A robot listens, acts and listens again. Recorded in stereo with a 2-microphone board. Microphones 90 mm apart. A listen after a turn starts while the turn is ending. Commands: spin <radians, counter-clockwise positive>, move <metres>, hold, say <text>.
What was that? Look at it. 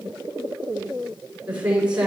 spin -0.52
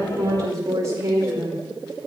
spin -2.53
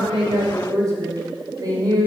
spin -0.87
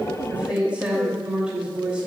spin -0.17
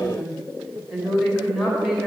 say Found it: a woman speaking, straight ahead.